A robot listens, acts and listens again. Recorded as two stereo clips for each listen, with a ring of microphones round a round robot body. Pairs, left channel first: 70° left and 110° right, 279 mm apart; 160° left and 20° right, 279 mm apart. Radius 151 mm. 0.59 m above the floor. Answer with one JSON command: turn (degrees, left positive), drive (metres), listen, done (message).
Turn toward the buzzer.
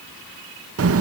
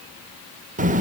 {"listen": true}
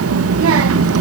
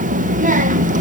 {"listen": true}
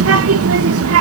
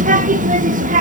{"done": "I can't make out a buzzer, only a child speaking."}